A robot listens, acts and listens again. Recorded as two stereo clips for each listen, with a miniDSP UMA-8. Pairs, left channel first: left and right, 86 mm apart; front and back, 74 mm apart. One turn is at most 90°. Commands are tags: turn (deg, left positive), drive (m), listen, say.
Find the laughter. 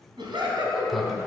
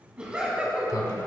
<turn deg="-90"/>
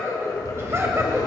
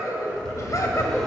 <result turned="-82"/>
<turn deg="-40"/>
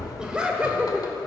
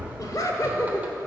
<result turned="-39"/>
<turn deg="-20"/>
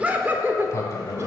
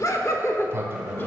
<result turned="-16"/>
<turn deg="-40"/>
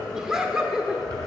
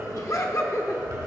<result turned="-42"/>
<turn deg="-10"/>
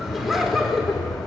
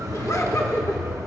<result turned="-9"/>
<say>Facing the laughter.</say>